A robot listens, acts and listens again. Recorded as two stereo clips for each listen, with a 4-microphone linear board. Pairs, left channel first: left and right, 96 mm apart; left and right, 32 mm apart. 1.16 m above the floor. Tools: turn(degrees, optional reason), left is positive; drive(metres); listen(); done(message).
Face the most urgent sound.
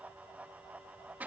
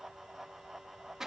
listen()
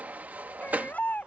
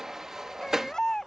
turn(degrees=20, reason="The baby crying: about 20° left or 160° left.")
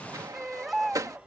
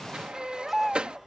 done("Found it: a baby crying, straight ahead.")